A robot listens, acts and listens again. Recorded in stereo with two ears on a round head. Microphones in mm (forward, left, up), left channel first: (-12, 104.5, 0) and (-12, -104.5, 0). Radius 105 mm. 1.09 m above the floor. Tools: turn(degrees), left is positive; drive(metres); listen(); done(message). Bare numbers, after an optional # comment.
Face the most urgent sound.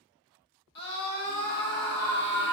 # The scream: about 50° left or 130° left.
turn(50)
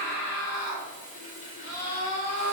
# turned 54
# So it is at 75° left.
turn(75)
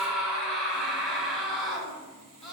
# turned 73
done("Found it: a scream, straight ahead.")